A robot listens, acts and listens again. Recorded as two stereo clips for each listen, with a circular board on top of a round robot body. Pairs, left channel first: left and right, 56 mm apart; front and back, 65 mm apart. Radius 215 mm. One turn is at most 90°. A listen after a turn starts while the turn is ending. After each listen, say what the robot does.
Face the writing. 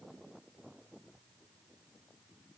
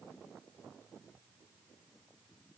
Keep listening.
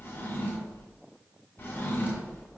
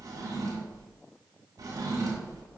Keep listening.
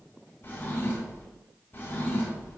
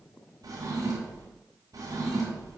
I can't make out writing, only a drawer.